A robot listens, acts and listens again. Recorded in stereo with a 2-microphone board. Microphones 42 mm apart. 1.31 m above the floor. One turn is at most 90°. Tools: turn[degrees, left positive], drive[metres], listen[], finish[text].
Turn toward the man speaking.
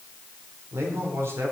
Action: turn[-90]
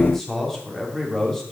Thought: So it is at 10° left.
Action: turn[10]
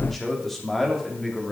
Thought: The man speaking is now 10° left.
Action: turn[10]
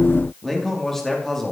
Thought: The man speaking is now 10° left.
Action: turn[10]
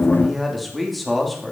Action: finish[Facing the man speaking, 2 to 4 m away.]